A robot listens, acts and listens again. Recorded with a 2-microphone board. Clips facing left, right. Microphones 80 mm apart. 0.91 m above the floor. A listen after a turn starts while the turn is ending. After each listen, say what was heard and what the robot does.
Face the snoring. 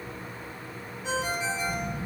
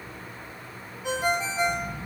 The snoring: about 20° left or 160° left. Turn 20° left.
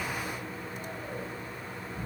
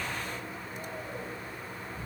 So it is at 140° left. Turn 140° left.
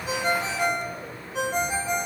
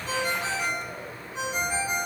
Keep listening.
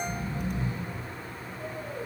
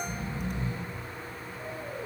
The snoring is now 30° right. Turn 30° right.
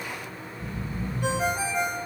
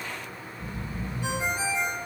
Facing the snoring, 2 to 4 m away.